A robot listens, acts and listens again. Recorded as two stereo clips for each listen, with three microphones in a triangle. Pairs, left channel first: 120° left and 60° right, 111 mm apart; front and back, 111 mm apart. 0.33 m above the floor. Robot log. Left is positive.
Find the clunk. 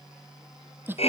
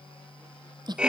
cmd idle
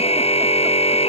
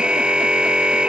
cmd idle
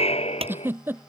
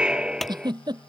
note: The clunk: 85° right.
cmd yaw -85
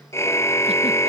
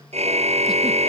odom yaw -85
end: Facing where the clunk came from. I can't hear it now.